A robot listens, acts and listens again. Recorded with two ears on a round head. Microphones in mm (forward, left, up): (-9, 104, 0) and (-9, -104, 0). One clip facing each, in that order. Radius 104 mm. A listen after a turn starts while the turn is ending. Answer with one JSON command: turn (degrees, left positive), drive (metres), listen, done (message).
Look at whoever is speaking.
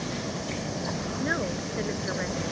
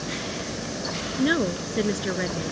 {"turn": -50}
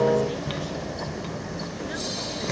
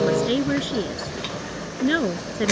{"turn": -80}
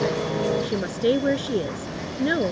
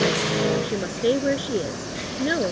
{"done": "Facing the woman speaking."}